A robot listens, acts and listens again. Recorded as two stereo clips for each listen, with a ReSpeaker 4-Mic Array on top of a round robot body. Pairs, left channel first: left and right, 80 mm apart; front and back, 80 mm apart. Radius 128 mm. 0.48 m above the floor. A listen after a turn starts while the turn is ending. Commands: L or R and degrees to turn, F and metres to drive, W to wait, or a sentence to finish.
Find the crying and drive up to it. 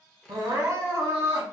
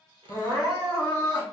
R60
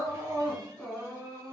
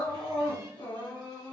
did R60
F1.0
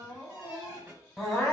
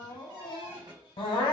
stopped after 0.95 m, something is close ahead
Arrived at the crying, straight ahead.